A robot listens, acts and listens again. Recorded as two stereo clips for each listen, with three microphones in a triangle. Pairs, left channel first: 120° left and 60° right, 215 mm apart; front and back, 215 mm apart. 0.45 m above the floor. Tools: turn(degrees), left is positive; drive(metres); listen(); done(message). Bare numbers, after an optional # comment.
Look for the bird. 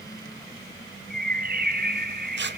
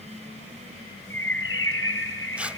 # The bird: 20° right.
turn(-20)
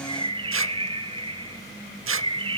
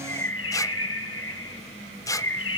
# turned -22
done("Found it: a bird, straight ahead, 1 to 2 m away.")